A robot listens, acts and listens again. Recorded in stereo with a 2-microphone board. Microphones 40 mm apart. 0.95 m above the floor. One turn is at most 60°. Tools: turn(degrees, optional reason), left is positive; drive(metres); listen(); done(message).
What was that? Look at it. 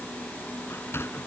turn(degrees=60)
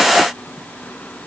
turn(degrees=30, reason="Nothing new. It was at 30° left.")
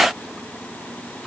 listen()
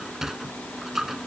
turn(degrees=-10, reason="The sliding door is now 10° right.")
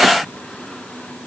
listen()
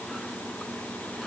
listen()
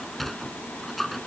done("Found it: a sliding door, straight ahead.")